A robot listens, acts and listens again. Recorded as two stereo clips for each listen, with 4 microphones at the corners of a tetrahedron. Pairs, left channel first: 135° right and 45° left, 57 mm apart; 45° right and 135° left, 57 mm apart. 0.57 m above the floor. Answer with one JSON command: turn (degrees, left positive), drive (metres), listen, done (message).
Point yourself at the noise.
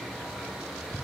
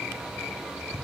{"listen": true}
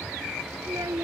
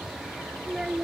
{"turn": 50}
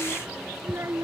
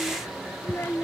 {"done": "Found it: a child speaking, straight ahead."}